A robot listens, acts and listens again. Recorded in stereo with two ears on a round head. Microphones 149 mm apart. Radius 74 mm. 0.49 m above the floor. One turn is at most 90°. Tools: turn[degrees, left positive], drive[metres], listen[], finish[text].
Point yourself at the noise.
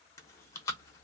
Thought: The chewing: about 20° left or 160° left.
Action: turn[20]
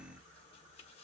Action: listen[]
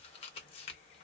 Thought: So it is at 140° left.
Action: turn[90]
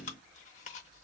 Thought: The chewing is now 50° left.
Action: turn[50]
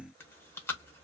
Thought: The chewing is now 15° left.
Action: turn[15]
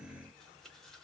Action: listen[]
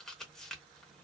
Action: finish[Facing the chewing, under 1 m away.]